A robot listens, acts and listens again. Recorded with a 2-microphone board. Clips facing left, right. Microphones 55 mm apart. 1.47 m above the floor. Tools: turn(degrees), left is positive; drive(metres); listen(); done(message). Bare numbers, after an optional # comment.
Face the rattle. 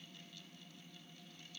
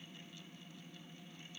listen()
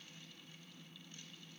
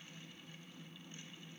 listen()
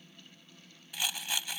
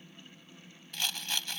turn(30)
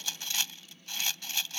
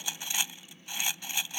# So it is at 20° right.
turn(-20)
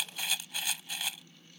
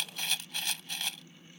done("Found it: a rattle, straight ahead.")